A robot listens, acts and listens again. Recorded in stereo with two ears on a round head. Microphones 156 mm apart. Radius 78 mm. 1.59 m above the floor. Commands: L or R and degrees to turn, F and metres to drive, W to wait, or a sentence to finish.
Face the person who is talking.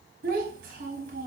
R55
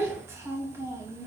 R20
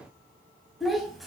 Facing the child speaking.